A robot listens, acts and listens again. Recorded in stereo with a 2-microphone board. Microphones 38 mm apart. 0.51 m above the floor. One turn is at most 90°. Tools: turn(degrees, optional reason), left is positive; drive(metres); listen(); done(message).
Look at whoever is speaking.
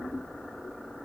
listen()
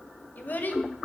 turn(degrees=50, reason="The child speaking: about 50° left or 130° left.")
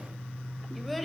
done("Facing the child speaking, 1 to 2 m away.")